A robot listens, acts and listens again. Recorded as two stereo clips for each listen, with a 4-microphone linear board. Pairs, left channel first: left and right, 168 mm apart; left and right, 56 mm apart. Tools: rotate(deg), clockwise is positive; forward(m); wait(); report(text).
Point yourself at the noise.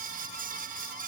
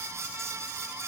wait()
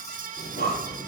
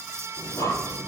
rotate(-90)
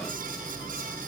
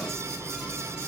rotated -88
report("Found it: breathing, straight ahead, over 4 m away.")